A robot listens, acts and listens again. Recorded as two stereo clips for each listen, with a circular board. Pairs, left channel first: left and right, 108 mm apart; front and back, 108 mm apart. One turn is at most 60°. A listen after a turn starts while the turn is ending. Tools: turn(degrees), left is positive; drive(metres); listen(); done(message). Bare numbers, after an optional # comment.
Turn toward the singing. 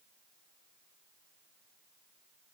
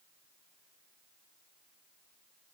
listen()
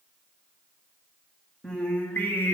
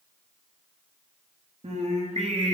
# The singing: 155° left.
turn(60)
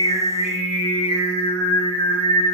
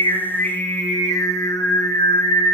# The singing is now 45° left.
turn(45)
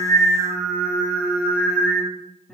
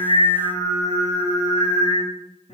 # The singing is now 10° left.
turn(10)
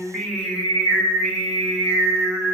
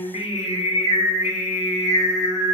done("Found it: singing, straight ahead.")